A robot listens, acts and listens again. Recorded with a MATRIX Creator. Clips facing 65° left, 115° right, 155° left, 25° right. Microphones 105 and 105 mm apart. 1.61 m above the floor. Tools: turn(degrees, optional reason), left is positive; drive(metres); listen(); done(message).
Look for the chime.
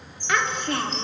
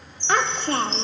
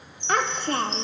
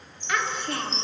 turn(degrees=30, reason="The chime: 30° left.")
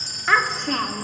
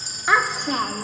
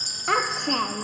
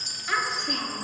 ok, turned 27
done("Found it: a chime, straight ahead.")